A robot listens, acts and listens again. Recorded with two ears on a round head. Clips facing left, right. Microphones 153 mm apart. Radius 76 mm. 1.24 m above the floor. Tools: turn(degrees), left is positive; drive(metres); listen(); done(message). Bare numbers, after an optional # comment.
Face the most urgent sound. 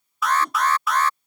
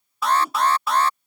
# The alarm: about 25° right or 155° right.
turn(-25)
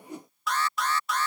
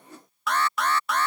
# So it is at 130° right.
turn(-130)
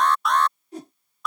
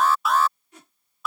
done("Found it: an alarm, straight ahead.")